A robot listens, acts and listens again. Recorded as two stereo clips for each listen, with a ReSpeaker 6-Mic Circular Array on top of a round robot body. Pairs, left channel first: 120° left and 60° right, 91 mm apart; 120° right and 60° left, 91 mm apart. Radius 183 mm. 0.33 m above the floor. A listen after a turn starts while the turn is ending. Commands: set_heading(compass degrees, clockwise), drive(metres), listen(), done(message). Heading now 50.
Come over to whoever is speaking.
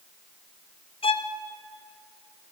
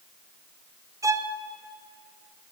listen()
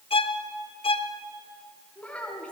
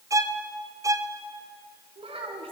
set_heading(10)
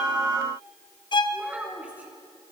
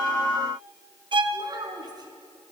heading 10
set_heading(355)
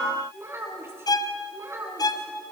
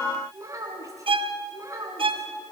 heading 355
drive(1.0)
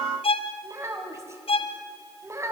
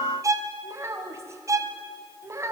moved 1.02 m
drive(1.0)
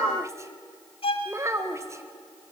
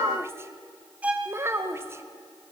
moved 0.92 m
drive(1.0)
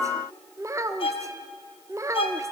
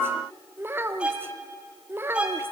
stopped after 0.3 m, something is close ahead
done("Arrived at the child speaking, straight ahead.")